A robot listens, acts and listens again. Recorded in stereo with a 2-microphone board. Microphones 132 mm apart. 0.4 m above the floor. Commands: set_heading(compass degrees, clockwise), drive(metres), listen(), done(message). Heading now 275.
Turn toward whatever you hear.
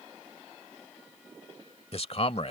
set_heading(225)
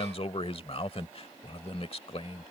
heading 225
set_heading(160)
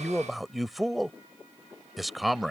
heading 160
done("Facing the man speaking.")